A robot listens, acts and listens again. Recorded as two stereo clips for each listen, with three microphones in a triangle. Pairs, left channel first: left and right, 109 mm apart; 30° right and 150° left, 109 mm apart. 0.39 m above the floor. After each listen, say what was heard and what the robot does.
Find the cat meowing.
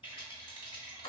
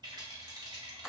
Keep listening.
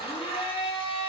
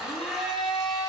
Keep listening.
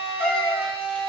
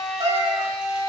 The cat meowing: 170° left. Turn 170° left.
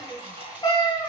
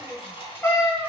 The cat meowing is now 35° left. Turn 35° left.
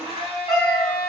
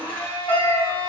Found it: a cat meowing, straight ahead.